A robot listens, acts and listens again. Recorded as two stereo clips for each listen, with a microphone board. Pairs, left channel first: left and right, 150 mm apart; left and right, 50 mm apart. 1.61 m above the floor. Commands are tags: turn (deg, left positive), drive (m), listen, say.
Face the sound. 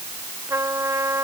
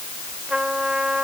<turn deg="-20"/>
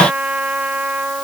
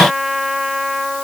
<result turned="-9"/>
<turn deg="-30"/>
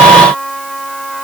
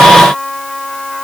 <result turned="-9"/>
<say>Facing the trumpet.</say>